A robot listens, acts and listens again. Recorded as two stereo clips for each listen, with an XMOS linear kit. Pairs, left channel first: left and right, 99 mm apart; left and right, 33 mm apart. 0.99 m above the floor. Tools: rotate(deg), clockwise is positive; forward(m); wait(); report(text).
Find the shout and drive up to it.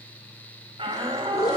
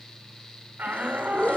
rotate(70)
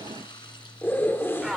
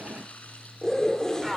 forward(1.0)
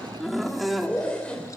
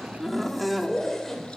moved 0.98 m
forward(1.0)
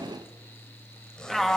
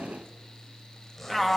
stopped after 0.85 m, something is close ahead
report("Arrived at the shout, straight ahead.")